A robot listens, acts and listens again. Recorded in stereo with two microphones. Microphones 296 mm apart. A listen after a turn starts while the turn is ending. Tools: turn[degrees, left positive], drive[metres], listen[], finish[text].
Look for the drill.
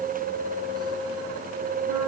Action: listen[]
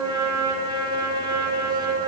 Action: listen[]
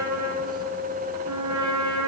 Action: finish[I can't make out a drill to turn to.]